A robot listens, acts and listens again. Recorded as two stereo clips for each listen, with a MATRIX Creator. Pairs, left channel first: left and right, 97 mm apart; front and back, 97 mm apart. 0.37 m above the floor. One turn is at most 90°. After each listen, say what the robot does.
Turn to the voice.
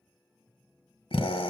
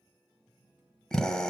Keep listening.
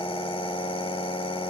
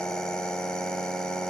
Keep listening.
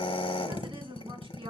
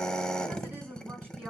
Turn 90° right.
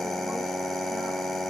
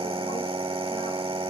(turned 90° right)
Turn 20° right.
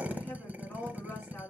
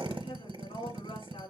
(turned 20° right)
Turn 15° left.
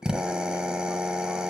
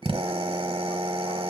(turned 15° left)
Keep listening.
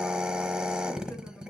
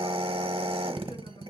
Found it: a woman speaking, straight ahead, over 4 m away.